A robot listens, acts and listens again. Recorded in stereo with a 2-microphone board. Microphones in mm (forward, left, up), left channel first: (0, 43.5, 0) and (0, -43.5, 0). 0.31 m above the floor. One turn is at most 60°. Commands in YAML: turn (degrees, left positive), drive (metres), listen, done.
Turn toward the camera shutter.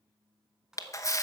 turn: 40
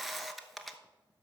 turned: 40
done: "Facing the camera shutter, under 1 m away."